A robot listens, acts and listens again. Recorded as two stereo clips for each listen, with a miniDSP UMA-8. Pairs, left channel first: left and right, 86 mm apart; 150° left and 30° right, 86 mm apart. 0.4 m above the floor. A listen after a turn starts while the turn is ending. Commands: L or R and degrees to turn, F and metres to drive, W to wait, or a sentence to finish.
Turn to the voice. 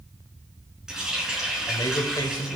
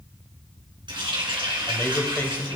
L95
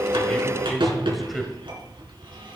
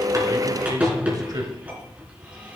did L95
Facing the man speaking.